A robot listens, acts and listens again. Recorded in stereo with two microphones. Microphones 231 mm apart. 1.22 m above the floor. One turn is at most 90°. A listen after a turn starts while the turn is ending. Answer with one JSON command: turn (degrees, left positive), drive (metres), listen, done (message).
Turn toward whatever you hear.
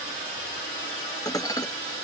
{"turn": 30}
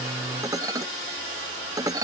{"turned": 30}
{"turn": -15}
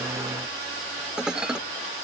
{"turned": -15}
{"done": "Found it: dishes clattering, straight ahead."}